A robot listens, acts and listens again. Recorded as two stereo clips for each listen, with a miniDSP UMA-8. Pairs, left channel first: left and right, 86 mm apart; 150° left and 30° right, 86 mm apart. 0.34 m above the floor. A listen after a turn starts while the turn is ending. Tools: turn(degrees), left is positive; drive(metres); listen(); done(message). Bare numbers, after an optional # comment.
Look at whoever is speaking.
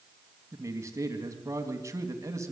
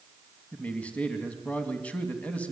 # The man speaking: 140° right.
turn(-140)
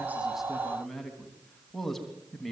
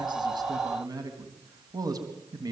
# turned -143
done("Found it: a man speaking, straight ahead.")